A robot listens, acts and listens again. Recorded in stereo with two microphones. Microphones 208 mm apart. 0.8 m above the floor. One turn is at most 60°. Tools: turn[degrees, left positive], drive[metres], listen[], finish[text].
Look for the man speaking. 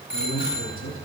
Action: turn[60]
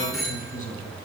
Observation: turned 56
Thought: So it is at 40° left.
Action: turn[40]
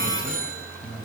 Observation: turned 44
Action: finish[Facing the man speaking, over 4 m away.]